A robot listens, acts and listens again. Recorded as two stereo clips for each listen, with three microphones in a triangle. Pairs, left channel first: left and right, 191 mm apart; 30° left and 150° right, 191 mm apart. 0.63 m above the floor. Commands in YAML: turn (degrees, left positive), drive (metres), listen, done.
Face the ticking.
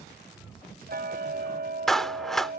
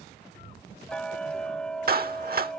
turn: -55
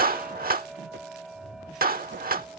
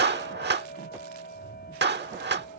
done: "Found it: ticking, straight ahead."